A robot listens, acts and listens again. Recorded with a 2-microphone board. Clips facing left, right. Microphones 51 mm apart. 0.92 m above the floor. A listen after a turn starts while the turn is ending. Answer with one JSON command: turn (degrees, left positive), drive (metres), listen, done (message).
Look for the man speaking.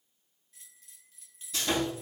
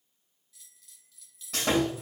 {"listen": true}
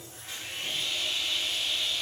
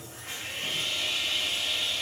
{"listen": true}
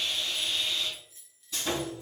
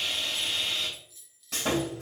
{"done": "I can't make out a man speaking to turn to."}